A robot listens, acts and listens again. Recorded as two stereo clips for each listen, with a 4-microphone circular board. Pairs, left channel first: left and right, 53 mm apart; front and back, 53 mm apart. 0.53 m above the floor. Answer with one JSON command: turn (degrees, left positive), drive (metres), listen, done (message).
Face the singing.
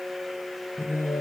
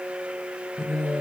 {"turn": 100}
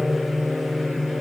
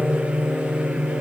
{"turn": -30}
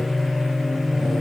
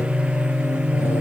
{"turn": 10}
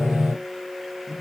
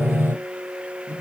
{"done": "Facing the singing, 2 to 4 m away."}